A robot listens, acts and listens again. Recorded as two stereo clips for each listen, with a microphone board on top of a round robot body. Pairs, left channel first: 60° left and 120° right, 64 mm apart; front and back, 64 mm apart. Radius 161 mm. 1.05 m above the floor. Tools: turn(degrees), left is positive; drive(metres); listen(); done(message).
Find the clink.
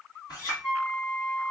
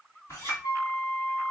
turn(degrees=40)
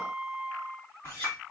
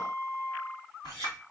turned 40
turn(degrees=10)
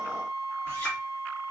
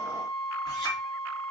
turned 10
done("Facing the clink.")